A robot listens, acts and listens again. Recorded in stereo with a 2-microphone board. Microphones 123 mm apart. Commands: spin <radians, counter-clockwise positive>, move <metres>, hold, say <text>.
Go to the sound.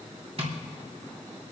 spin -0.87
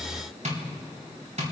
spin -1.31
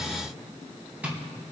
spin -0.17
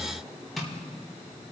move 1.0
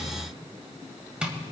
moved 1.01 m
spin -0.17
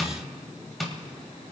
move 1.0
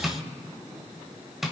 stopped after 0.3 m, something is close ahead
say I am next to the tapping.